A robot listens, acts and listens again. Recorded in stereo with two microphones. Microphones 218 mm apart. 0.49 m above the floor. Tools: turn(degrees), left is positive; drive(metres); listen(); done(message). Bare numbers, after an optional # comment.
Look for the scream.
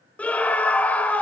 turn(30)
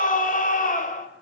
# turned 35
# So it is at 135° left.
turn(135)
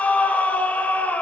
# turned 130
# The scream is now 10° left.
turn(10)
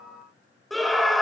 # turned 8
done("Facing the scream, 2 to 4 m away.")